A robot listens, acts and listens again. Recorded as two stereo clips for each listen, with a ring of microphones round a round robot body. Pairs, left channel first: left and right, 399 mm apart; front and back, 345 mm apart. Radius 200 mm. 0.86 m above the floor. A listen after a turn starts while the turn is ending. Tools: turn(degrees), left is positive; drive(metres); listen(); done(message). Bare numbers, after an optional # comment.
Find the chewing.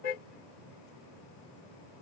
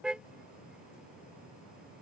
listen()
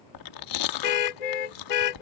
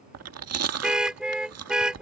# The chewing: 135° left.
turn(135)
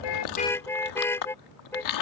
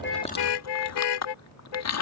# The chewing is now 45° left.
turn(45)
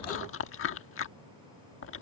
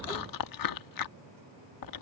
# The chewing is now 30° left.
turn(30)
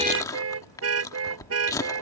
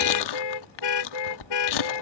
# The chewing is now 10° left.
turn(10)
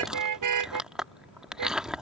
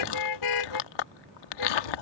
done("Facing the chewing.")